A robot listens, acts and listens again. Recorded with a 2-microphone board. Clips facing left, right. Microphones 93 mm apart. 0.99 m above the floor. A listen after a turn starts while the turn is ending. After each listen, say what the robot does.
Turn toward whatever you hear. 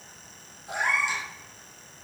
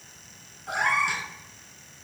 Turn 60° right.
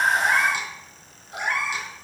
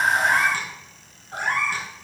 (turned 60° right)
Turn 55° right.
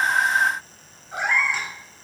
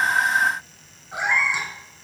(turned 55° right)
Turn 10° right.
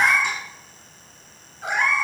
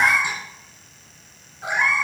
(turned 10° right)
Facing the cat meowing.